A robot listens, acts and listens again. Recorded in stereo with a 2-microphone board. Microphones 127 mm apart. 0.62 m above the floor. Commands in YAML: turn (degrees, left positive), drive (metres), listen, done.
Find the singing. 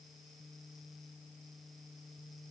listen: true
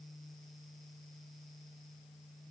listen: true
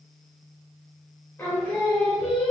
turn: 30
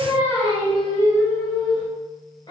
turn: 145
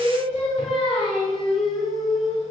turn: 45
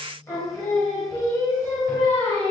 turn: 20
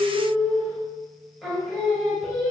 done: "Facing the singing."